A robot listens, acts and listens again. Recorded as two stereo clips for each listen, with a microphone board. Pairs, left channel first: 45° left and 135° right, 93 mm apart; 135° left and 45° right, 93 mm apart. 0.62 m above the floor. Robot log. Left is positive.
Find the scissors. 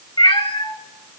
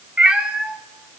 cmd idle
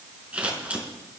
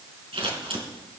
note: The scissors: 60° right.
cmd yaw -60
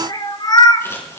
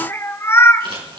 note: The scissors is now 15° right.
cmd yaw -15
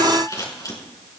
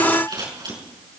end: Facing the scissors, over 4 m away.